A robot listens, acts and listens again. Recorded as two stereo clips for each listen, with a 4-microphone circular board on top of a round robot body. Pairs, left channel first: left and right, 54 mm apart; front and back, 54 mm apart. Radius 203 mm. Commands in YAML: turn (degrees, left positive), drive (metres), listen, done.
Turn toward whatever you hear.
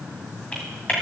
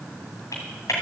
turn: 20
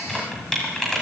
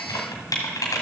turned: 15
done: "Found it: typing on a keyboard, straight ahead, 1 to 2 m away."